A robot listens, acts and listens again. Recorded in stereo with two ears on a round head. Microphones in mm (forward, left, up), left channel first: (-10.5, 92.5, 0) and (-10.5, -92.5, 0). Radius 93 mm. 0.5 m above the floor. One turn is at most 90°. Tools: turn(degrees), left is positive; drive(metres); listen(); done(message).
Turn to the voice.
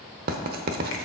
listen()
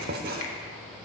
listen()
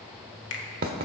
done("I can't make out anyone speaking, only a finger snap and writing.")